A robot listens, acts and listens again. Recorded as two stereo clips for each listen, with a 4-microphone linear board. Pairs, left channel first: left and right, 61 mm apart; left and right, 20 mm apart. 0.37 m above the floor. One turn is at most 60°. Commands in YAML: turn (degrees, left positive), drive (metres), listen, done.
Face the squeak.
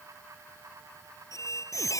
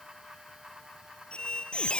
turn: 60
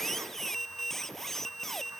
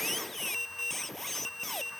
done: "Facing the squeak."